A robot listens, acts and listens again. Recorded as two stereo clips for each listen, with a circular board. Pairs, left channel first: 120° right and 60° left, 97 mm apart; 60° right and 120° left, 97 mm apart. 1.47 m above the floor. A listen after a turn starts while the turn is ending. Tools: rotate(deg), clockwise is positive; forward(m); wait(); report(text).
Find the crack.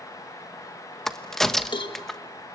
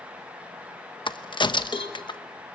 rotate(35)
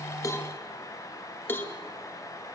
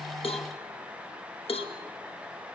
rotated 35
report("I heard a crack from this way, but can't make it out now.")